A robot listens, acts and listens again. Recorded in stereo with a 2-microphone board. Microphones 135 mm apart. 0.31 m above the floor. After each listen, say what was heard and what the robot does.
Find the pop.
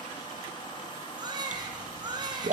The pop: about 60° right or 120° right. Turn 60° right.
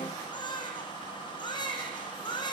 Keep listening.
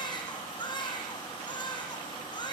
I heard a pop, but can't make it out now. It was about straight ahead or 60° right.